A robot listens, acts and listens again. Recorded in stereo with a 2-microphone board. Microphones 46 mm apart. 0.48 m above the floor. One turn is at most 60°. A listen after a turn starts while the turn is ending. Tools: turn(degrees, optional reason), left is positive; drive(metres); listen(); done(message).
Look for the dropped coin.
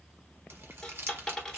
turn(degrees=30)
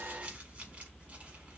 listen()
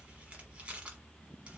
done("I heard a dropped coin, but can't make it out now. It was about 20° right or 140° left.")